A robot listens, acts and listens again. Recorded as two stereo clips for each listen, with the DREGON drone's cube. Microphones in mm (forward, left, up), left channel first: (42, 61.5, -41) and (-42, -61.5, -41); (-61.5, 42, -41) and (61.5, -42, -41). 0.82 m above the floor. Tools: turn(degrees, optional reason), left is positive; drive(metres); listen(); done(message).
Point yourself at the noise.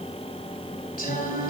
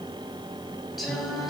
turn(degrees=55, reason="The singing: 55° left.")
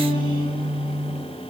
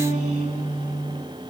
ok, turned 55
done("Found it: singing, straight ahead.")